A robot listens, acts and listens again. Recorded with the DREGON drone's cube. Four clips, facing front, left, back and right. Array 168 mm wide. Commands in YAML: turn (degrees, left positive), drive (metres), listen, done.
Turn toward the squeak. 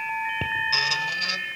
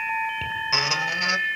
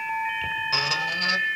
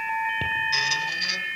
turn: 110
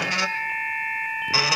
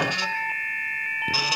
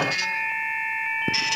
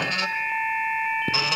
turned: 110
turn: -15
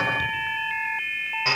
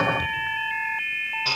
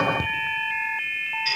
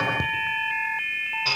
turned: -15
done: "Found it: a squeak, straight ahead."